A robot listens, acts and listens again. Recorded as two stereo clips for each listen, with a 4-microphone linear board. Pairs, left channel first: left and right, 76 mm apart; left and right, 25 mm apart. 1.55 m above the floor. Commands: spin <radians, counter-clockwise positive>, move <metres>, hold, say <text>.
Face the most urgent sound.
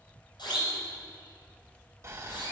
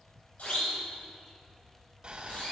spin 1.22
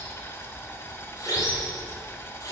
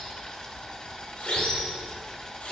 spin 0.70
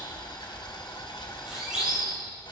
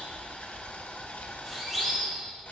spin -0.17
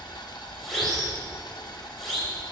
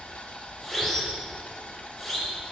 say Found it: a siren, straight ahead.